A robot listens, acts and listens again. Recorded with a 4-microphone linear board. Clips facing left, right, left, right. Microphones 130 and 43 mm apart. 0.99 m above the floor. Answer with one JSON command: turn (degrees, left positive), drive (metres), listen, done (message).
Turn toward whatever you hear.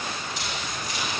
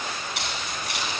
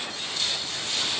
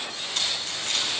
{"turn": -70}
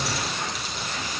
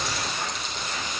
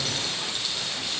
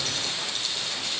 {"listen": true}
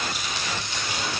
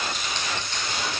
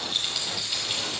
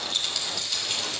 {"turn": 10}
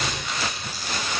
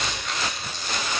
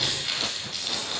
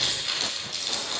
{"done": "Facing the keys jangling."}